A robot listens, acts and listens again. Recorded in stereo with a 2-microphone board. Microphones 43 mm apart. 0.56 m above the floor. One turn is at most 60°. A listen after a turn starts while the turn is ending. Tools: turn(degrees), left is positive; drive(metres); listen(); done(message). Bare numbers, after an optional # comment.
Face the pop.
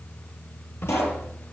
turn(60)
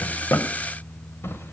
# Nothing new. It was at 30° left.
turn(30)
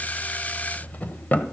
done("Facing where the pop came from. I can't hear it now.")